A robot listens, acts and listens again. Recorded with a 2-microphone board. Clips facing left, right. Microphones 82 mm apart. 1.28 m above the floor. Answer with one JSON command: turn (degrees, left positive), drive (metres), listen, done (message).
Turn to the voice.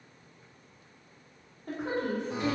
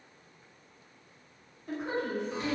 {"turn": 65}
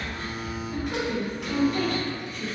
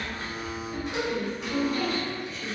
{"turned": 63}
{"turn": 50}
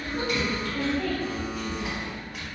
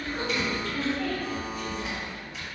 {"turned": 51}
{"done": "Found it: a woman speaking, straight ahead, 1 to 2 m away."}